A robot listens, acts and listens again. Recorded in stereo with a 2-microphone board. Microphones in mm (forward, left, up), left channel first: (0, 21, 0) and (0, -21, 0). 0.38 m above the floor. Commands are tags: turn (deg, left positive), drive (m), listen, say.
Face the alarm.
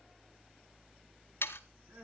<listen/>
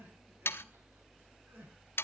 <listen/>
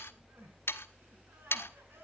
<say>I can't make out an alarm, only sawing and crying.</say>